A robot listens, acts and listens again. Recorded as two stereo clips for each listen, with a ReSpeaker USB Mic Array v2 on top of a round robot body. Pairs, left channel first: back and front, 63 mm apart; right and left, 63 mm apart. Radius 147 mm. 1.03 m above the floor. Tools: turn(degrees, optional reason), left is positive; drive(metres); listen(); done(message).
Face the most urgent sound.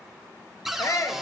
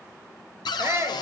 turn(degrees=140, reason="The shout: 140° left.")
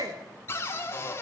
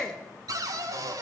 turn(degrees=-10, reason="The shout is now 10° right.")
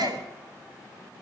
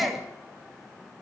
done("Facing the shout.")